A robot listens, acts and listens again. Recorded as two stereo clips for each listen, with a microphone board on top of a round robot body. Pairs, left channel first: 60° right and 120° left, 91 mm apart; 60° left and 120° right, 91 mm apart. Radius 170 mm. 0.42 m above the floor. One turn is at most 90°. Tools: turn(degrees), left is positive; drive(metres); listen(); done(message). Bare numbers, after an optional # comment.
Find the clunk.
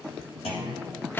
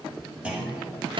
# The clunk: 40° right.
turn(-40)
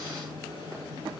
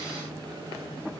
done("I heard a clunk from this way, but can't make it out now.")